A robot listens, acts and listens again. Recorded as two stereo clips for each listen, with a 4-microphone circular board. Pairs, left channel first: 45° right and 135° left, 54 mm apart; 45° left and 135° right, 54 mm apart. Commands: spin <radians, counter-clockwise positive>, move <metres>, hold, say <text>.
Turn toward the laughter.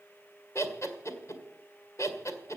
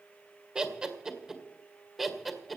spin -0.79
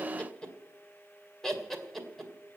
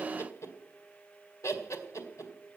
spin 0.70
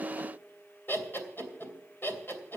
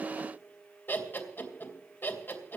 say Found it: laughter, straight ahead.